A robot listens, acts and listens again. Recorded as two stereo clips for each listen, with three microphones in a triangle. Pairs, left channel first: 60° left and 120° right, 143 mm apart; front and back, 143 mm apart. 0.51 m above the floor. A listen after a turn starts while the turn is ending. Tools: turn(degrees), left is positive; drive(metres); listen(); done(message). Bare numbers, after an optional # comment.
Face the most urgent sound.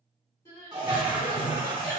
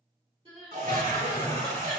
# The crying: 125° left.
turn(125)
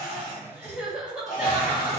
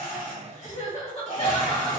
# The crying is now 40° right.
turn(-40)
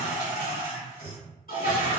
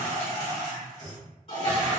listen()
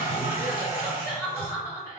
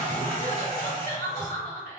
# The crying is now 10° right.
turn(-10)
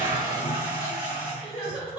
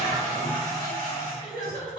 done("Facing the crying.")